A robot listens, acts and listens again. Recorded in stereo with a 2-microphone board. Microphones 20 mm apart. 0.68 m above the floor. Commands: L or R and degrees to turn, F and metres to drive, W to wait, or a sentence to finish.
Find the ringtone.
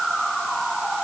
W
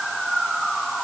W
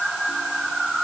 I can't make out a ringtone to turn to.